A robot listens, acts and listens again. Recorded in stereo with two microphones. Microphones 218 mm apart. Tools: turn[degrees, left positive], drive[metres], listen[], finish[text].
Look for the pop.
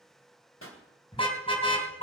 Action: turn[90]
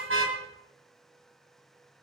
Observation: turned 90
Action: finish[Facing where the pop came from. I can't hear it now.]